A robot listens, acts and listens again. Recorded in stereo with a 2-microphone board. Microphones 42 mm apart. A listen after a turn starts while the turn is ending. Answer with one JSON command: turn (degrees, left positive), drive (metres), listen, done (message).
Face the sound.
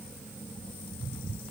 {"listen": true}
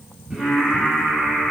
{"turn": -30}
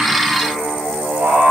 {"turn": -115}
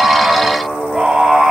{"done": "Facing the singing, 2 to 4 m away."}